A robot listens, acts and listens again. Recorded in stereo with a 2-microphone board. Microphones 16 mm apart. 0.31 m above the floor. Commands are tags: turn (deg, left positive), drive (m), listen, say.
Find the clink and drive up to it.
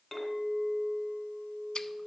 <turn deg="30"/>
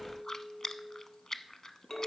<turn deg="145"/>
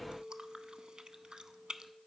<drive m="1.0"/>
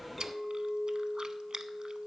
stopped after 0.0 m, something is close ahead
<say>Something is in my way. I am facing the clink but have not reached it.</say>